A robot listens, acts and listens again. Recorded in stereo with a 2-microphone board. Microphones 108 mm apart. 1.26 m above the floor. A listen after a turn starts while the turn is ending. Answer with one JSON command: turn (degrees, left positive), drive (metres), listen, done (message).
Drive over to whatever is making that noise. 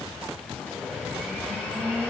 {"turn": 30}
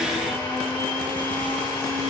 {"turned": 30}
{"turn": 135}
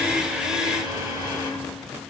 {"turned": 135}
{"turn": -40}
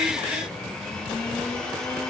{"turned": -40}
{"turn": 10}
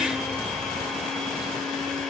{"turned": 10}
{"drive": 1.0}
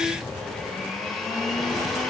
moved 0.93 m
{"drive": 1.0}
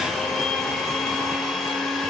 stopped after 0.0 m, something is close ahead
{"done": "I am next to the blender."}